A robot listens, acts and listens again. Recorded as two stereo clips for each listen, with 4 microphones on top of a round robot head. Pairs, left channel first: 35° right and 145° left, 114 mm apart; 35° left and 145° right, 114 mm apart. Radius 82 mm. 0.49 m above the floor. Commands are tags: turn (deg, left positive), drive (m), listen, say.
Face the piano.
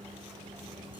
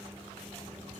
<listen/>
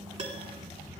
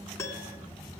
<turn deg="100"/>
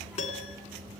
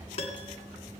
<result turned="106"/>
<say>Facing the piano.</say>